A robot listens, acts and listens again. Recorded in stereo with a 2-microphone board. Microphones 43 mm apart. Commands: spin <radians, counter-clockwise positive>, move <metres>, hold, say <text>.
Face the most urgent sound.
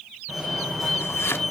spin -0.52
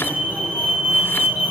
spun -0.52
spin -2.53
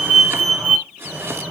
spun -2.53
spin -0.44
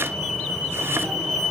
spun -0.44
spin 0.44
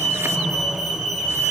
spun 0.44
say Facing the fire alarm, over 4 m away.